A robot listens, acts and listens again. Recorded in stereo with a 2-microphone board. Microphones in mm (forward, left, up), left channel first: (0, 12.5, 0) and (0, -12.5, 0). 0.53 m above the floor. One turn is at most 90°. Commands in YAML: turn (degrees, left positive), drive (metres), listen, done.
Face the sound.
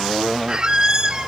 turn: -35
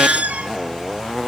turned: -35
turn: -90
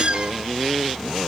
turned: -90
turn: -40
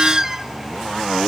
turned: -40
turn: -15
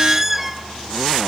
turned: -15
done: "Found it: a squeak, straight ahead, under 1 m away."